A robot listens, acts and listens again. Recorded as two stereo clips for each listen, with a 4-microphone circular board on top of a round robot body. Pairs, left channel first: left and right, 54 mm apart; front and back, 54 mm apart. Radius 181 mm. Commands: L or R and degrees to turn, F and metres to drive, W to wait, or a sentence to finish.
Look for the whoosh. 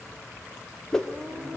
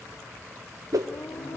L170
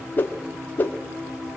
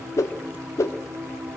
L35
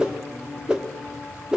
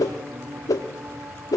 R15
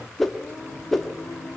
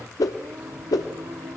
Found it: a whoosh, straight ahead, 1 to 2 m away.